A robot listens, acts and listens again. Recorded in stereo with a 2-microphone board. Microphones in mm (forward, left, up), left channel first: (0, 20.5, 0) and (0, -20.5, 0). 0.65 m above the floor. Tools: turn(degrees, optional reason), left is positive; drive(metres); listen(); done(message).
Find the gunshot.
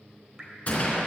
turn(degrees=35, reason="The gunshot: about 35° left or 145° left.")
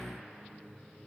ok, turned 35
listen()
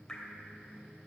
done("I heard a gunshot, but can't make it out now. It was about straight ahead or 110° left.")